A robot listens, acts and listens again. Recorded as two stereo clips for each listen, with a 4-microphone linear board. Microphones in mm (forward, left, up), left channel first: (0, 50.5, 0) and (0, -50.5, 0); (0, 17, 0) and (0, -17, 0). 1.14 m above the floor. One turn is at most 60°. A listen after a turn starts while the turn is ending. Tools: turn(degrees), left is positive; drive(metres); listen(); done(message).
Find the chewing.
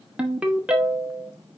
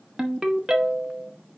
listen()
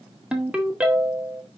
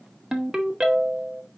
listen()
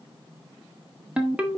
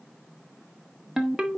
done("I can't make out chewing to turn to.")